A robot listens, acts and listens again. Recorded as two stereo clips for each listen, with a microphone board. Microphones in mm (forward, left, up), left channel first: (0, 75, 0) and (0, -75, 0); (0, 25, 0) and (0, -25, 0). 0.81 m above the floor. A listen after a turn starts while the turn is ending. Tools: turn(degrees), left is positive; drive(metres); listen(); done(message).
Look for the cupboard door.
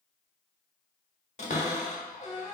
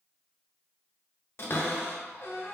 turn(degrees=55)
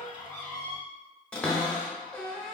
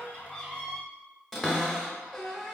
done("Found it: a cupboard door, straight ahead, under 1 m away.")